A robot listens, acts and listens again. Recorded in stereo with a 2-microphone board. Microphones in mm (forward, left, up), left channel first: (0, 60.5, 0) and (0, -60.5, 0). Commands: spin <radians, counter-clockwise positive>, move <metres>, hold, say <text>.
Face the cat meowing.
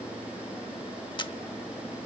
hold
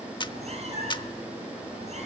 spin -1.05
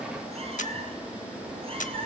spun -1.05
spin -0.79
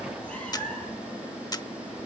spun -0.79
spin 0.17
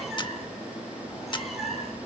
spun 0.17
say Facing the cat meowing.